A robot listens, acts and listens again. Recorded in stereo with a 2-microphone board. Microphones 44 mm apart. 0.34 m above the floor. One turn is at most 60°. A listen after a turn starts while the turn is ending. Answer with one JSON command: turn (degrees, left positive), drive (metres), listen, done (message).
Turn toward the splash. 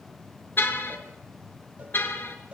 {"listen": true}
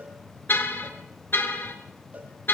{"listen": true}
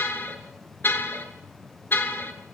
{"done": "I can't make out a splash to turn to."}